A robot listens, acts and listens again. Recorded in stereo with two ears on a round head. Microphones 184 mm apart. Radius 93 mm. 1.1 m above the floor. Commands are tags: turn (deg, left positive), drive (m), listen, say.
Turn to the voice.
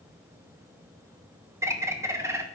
<listen/>
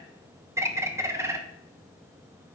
<listen/>
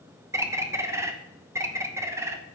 <say>I can't make out anyone speaking to turn to.</say>